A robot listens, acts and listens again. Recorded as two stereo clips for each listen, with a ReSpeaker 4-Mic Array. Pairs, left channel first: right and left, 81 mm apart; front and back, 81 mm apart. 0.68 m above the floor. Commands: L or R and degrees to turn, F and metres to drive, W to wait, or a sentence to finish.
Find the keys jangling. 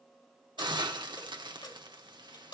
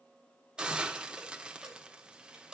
R100
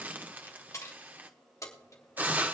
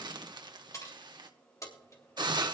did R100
R45
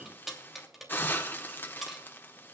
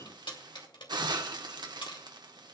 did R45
Facing the keys jangling, 2 to 4 m away.